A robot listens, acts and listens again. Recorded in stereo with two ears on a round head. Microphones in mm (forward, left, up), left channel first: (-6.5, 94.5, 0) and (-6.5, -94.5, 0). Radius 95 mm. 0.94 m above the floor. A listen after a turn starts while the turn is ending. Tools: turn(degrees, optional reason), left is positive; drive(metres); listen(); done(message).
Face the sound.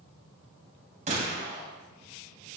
turn(degrees=-35, reason="The gunshot: about 35° right or 145° right.")
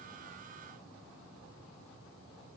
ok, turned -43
listen()
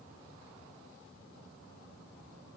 done("I heard a gunshot, but can't make it out now. It was about 10° left or 100° right.")